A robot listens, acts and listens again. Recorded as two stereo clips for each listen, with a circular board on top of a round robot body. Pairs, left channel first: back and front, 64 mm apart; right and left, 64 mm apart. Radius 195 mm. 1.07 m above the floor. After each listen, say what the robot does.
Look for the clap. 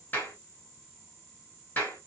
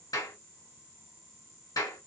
Turn 115° right.
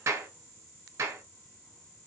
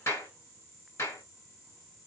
Turn 40° right.
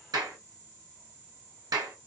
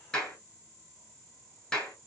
Turn 10° right.
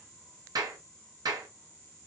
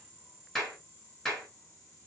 Facing the clap, 1 to 2 m away.